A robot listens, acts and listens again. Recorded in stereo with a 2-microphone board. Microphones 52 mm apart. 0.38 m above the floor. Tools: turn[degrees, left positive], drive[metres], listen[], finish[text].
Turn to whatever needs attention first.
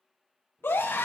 Thought: The scream: about 45° left or 135° left.
Action: turn[45]
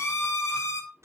Thought: So it is at 80° left.
Action: turn[80]
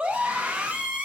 Thought: The scream is now 25° right.
Action: turn[-25]
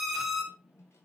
Action: finish[Found it: a scream, straight ahead, 2 to 4 m away.]